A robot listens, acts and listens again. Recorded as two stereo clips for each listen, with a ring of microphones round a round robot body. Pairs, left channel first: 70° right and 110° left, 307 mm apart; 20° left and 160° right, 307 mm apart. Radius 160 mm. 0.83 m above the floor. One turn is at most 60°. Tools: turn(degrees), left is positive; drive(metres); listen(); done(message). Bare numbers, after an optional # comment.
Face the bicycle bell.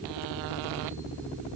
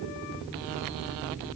listen()
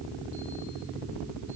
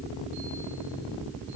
listen()
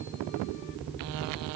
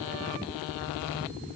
done("I can't make out a bicycle bell to turn to.")